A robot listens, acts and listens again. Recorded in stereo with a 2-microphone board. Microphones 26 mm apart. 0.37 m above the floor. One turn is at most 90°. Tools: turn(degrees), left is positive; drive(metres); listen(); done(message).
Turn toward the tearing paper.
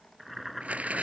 turn(degrees=-65)
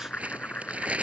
turn(degrees=-55)
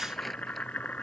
listen()
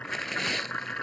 done("Found it: tearing paper, straight ahead.")